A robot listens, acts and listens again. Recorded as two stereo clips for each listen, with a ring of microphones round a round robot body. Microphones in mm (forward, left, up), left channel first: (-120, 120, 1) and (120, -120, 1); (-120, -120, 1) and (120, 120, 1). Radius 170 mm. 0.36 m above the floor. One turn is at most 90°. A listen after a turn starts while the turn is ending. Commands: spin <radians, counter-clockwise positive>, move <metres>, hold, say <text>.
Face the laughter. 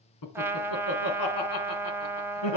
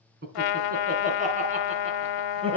spin 1.57
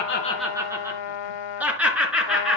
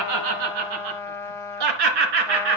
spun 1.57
spin 0.79
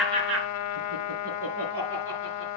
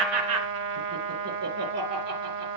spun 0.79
say Found it: laughter, straight ahead.